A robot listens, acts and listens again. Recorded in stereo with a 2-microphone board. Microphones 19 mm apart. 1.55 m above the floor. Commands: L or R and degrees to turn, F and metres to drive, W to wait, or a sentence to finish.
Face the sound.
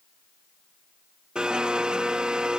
R55
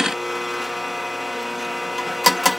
Facing the blender.